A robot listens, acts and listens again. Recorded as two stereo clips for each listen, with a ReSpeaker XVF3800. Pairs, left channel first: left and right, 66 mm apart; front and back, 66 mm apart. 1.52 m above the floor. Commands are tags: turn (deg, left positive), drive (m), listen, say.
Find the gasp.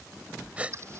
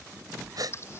<turn deg="-160"/>
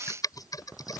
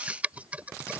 <say>Facing where the gasp came from. I can't hear it now.</say>